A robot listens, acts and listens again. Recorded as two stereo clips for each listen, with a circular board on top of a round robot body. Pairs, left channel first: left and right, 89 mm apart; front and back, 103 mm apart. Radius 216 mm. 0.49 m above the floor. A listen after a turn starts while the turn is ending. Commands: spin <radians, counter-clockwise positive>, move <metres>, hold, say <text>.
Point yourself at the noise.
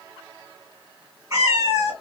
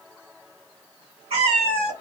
spin -2.62
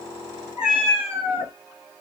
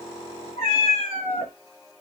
say Found it: a cat meowing, straight ahead.